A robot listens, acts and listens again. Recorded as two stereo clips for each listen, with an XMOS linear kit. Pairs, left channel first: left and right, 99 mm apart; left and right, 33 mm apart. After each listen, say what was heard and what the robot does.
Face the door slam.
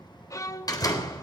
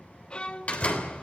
The door slam: about 40° left or 140° left. Turn 40° left.
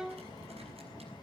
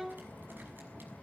Keep listening.
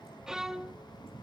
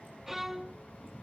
I heard a door slam, but can't make it out now. It was about straight ahead or 100° left.